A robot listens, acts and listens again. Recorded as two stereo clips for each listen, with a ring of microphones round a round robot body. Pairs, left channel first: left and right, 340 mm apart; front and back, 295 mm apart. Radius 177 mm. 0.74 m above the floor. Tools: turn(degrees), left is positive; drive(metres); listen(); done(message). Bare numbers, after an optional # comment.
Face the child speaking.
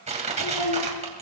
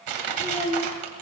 # The child speaking: 70° left.
turn(70)
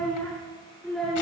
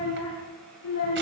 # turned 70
done("Found it: a child speaking, straight ahead, over 4 m away.")